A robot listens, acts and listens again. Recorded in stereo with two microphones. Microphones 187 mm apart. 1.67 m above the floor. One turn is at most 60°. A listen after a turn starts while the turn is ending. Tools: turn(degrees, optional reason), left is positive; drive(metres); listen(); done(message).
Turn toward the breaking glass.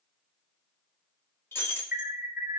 turn(degrees=30)
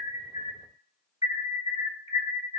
listen()
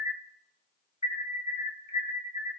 done("I heard breaking glass, but can't make it out now. It was about 15° right or 135° left.")